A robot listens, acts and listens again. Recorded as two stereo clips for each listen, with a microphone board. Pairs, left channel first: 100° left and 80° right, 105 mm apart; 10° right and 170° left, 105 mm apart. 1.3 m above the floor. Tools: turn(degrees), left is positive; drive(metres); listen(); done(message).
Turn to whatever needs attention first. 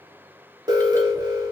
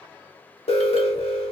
turn(degrees=-25)
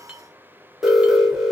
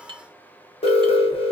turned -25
turn(degrees=10)
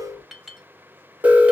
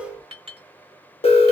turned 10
done("Found it: an alarm, straight ahead, under 1 m away.")